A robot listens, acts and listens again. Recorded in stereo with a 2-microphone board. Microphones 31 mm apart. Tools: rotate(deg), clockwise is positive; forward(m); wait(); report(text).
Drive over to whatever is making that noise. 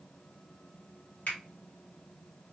rotate(-60)
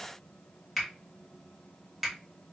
forward(1.0)
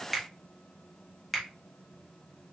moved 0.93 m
forward(1.0)
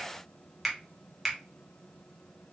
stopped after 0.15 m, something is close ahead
report("Arrived at the finger snap, straight ahead.")